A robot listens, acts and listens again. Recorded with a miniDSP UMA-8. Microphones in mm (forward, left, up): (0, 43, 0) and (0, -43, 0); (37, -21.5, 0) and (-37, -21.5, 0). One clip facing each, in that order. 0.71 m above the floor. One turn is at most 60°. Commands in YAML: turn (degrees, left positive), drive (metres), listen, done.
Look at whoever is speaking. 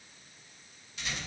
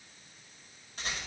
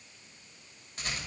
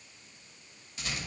listen: true
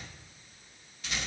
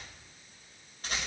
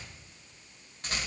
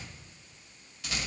listen: true
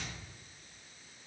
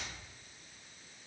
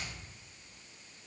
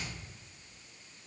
done: "I can't make out anyone speaking to turn to."